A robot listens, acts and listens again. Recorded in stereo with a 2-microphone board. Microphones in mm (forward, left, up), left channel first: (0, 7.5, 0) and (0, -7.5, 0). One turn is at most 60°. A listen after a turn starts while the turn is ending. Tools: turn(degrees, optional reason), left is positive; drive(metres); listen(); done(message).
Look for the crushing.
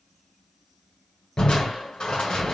turn(degrees=60, reason="The crushing: about 65° left or 115° left.")
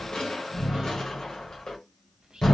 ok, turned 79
turn(degrees=40, reason="So it is at 40° left.")
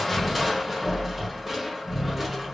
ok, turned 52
turn(degrees=-15, reason="The crushing is now 15° right.")
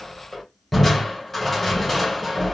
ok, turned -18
done("Facing the crushing.")